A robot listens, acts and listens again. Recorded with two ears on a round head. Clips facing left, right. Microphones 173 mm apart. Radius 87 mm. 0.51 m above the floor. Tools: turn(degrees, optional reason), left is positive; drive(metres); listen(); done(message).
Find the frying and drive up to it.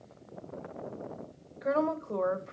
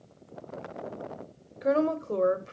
listen()
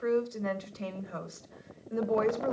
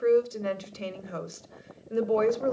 listen()
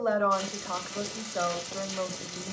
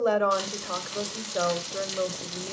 turn(degrees=-70, reason="The frying: about 70° right or 110° right.")
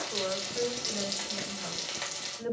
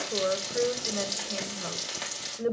drive(metres=1.0)
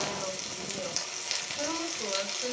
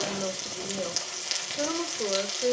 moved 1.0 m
drive(metres=1.0)
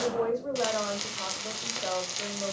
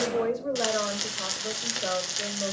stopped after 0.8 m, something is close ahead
turn(degrees=-10, reason="The frying is now 10° right.")
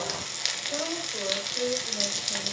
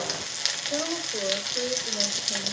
done("I am next to the frying.")